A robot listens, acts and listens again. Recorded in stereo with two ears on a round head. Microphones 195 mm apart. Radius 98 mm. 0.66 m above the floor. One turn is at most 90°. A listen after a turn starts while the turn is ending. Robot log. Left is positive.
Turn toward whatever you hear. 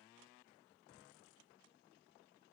cmd idle
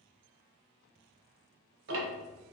note: The ticking: about 60° right or 120° right.
cmd yaw -60
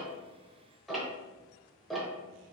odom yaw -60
end: Facing the ticking.